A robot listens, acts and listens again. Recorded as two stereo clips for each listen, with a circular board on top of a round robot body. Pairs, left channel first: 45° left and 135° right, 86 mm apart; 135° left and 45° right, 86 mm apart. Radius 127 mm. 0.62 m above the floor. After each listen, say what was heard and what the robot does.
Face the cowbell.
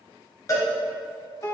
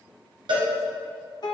The cowbell: 10° right. Turn 10° right.
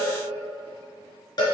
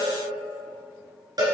Facing the cowbell, 1 to 2 m away.